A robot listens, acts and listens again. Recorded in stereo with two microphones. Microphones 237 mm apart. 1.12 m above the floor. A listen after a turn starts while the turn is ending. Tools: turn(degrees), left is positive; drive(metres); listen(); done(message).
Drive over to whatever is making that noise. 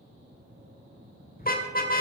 turn(degrees=35)
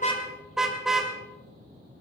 drive(metres=1.0)
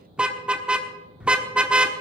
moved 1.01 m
drive(metres=1.0)
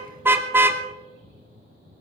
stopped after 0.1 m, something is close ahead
turn(degrees=-10)
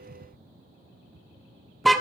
done("I am next to the car horn.")